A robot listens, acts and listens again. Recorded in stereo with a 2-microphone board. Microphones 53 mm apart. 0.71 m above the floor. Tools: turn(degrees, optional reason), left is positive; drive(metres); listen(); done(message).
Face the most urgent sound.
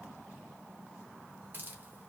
listen()
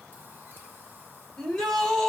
turn(degrees=30)
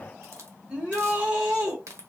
turn(degrees=-20, reason="So it is at 20° right.")
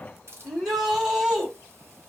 done("Found it: a shout, straight ahead.")